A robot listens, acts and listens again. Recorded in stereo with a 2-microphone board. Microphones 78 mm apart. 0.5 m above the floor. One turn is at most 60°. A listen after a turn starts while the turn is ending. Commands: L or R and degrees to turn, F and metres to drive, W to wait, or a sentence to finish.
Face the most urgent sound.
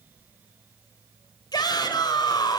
L60
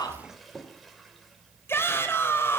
L35
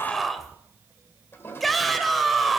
Found it: a shout, straight ahead, 2 to 4 m away.